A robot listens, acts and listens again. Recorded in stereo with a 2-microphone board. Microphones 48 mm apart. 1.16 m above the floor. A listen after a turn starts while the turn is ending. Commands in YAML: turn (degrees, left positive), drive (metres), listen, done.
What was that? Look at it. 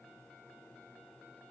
listen: true
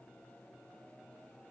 listen: true
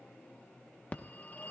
turn: 35
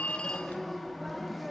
done: "Facing the phone ringing."